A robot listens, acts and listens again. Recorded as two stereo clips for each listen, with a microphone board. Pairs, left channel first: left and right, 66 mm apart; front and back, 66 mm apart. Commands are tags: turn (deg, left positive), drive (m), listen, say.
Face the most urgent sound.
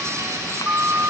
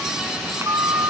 <turn deg="-145"/>
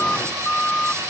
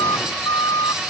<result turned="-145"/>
<turn deg="15"/>
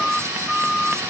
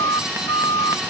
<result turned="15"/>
<say>Found it: a siren, straight ahead.</say>